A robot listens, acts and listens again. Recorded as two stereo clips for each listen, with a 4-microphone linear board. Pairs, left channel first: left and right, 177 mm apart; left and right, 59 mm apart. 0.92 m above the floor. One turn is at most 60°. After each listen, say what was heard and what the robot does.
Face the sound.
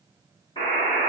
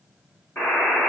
The buzzer: about 30° left or 150° left. Turn 30° left.
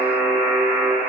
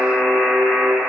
So it is at 120° left. Turn 60° left.
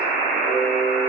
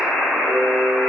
The buzzer is now 60° left. Turn 60° left.
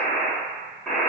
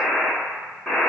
Facing the buzzer.